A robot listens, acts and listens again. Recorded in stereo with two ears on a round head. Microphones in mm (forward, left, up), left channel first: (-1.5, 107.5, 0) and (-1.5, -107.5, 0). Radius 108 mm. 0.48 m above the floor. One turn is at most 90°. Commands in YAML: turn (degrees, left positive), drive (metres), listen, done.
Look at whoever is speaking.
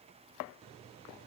listen: true
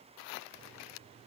listen: true
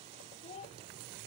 turn: 25
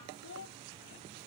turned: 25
turn: 90
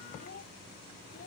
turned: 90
turn: 35
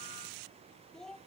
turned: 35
done: "Found it: a child speaking, straight ahead."